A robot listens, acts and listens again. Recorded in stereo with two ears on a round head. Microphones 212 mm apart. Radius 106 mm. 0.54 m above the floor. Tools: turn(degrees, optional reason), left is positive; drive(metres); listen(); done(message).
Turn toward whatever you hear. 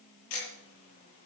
turn(degrees=65, reason="The ticking: about 65° left or 115° left.")
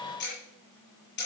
turn(degrees=50, reason="So it is at 50° left.")
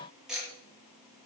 done("Found it: ticking, straight ahead.")